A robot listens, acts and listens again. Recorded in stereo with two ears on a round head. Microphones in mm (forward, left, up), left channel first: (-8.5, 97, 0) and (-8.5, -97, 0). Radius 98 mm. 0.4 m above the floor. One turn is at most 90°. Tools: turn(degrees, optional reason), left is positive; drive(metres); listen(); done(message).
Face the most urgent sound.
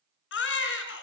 turn(degrees=55, reason="The baby crying: about 55° left or 125° left.")
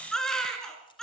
done("Found it: a baby crying, straight ahead, 2 to 4 m away.")